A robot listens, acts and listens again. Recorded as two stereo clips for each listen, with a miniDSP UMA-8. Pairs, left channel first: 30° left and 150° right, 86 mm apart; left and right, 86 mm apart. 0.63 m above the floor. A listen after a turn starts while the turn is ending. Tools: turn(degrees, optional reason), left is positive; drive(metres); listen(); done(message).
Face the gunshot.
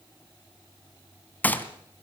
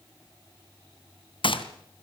turn(degrees=100, reason="The gunshot: 100° left.")
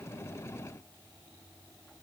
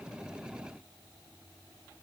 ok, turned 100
done("Facing where the gunshot came from. I can't hear it now.")